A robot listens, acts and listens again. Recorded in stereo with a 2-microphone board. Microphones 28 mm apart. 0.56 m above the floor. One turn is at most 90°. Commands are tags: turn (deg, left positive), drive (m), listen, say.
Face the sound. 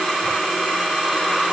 <listen/>
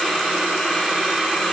<listen/>
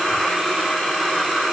<say>I can't make out anything to turn to.</say>